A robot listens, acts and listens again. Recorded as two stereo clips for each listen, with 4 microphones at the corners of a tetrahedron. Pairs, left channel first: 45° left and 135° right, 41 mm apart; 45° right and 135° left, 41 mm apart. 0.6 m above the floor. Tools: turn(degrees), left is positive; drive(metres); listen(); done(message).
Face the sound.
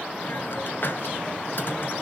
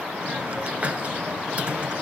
turn(degrees=80)
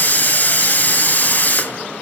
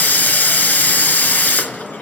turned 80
done("Facing the hiss.")